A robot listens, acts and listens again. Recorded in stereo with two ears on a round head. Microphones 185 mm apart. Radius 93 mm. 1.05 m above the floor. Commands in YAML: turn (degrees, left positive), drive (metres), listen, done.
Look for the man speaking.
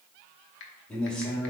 turn: 30
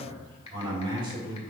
turn: -25
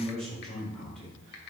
done: "Found it: a man speaking, straight ahead."